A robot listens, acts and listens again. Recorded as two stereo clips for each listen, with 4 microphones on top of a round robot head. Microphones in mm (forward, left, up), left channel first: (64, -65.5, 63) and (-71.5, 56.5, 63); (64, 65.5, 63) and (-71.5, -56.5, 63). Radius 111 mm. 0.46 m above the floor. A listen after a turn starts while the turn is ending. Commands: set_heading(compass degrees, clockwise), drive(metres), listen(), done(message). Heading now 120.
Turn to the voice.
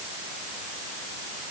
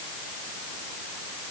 listen()
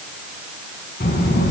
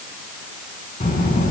done("Facing the child speaking, over 4 m away.")